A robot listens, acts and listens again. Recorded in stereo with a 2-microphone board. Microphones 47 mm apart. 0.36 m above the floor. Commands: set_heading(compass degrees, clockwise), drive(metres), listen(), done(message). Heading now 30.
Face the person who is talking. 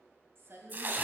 set_heading(90)
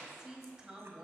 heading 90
set_heading(110)
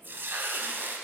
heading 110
listen()
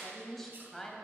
done("Facing the woman speaking.")